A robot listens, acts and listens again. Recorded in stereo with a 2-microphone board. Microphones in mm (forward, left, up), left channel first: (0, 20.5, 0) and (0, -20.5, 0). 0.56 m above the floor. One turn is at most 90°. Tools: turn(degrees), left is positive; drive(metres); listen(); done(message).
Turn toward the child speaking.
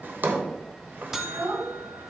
turn(degrees=-65)
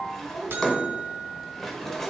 turn(degrees=-40)
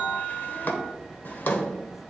listen()
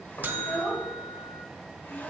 turn(degrees=15)
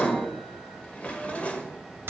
listen()
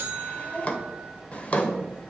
done("Found it: a child speaking, straight ahead, over 4 m away.")